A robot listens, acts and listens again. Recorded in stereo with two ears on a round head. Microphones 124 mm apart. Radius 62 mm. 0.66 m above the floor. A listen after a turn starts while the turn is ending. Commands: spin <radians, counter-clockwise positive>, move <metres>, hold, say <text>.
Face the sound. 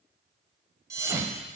spin -0.35
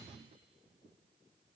hold
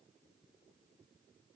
say I heard a thud, but can't make it out now. It was about straight ahead or 140° right.